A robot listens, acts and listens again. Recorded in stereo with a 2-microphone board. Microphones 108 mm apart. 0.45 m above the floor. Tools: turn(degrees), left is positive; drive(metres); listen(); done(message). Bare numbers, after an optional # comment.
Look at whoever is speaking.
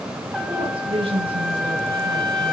# The woman speaking: about 60° right or 120° right.
turn(-60)
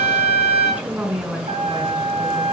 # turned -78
# So it is at 15° right.
turn(-15)
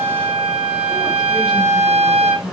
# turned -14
listen()
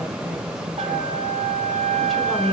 done("Facing the woman speaking, 1 to 2 m away.")